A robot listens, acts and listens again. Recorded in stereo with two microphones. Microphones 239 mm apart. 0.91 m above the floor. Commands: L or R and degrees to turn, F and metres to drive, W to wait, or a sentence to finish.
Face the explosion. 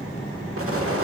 R65
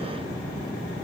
W
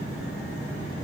I heard an explosion, but can't make it out now. It was about straight ahead or 50° right.